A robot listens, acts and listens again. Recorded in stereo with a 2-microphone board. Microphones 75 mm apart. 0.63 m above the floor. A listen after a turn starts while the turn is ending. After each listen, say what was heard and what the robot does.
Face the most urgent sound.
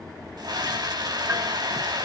The scream: about 65° right or 115° right. Turn 65° right.
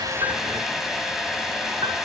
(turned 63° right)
Found it: a scream, straight ahead.